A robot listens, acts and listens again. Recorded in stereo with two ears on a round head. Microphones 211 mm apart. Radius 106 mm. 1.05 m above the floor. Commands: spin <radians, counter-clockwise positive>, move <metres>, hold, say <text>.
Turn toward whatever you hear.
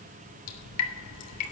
spin 1.57
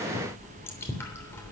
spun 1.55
spin 0.17
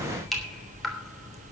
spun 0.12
say Facing the dripping.